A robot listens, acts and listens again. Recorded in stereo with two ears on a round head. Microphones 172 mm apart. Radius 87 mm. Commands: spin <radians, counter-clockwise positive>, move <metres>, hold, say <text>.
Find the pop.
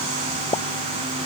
spin 0.44
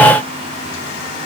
hold
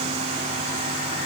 say I heard a pop, but can't make it out now. It was about straight ahead or 130° left.